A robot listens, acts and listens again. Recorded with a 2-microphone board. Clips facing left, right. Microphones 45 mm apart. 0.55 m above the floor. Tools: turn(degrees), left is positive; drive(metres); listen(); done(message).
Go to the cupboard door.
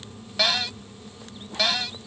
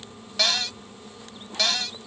turn(degrees=30)
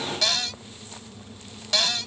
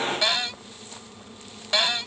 turn(degrees=-20)
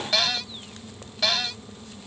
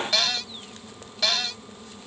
drive(metres=1.0)
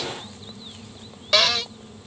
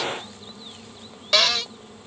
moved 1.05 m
drive(metres=1.0)
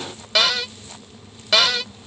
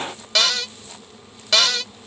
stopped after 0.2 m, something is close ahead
turn(degrees=10)
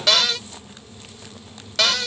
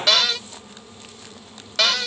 done("I am next to the cupboard door.")